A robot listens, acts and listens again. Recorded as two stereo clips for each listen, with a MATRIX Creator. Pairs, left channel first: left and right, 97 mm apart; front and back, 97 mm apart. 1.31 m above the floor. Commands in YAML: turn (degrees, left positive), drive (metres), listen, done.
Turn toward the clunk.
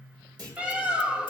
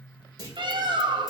turn: -130
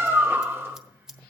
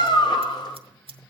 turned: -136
done: "Facing where the clunk came from. I can't hear it now."